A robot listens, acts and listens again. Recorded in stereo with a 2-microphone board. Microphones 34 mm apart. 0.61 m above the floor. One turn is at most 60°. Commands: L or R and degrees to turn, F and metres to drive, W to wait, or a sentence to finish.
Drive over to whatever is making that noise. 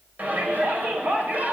R50
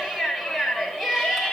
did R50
F1.0
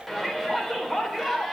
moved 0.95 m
F1.0
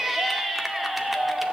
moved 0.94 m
R10
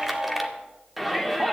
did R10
F1.0
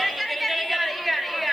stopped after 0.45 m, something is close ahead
Arrived at the shout, straight ahead.